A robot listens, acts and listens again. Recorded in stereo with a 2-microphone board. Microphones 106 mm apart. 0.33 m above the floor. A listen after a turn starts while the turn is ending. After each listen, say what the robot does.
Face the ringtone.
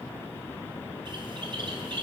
Keep listening.
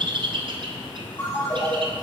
Turn 20° left.
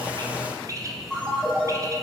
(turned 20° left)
Facing the ringtone.